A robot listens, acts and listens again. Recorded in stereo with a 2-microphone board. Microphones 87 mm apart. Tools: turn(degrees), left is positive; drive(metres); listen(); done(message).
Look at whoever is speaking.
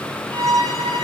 listen()
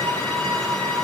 listen()
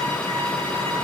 done("I can't make out anyone speaking to turn to.")